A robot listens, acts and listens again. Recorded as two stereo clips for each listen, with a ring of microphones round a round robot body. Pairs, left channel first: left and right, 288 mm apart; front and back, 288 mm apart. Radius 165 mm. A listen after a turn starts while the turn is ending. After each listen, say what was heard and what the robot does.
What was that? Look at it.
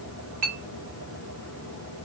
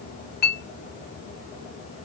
The clink: 60° right. Turn 60° right.
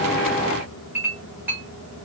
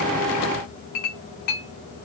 Found it: a clink, straight ahead, 1 to 2 m away.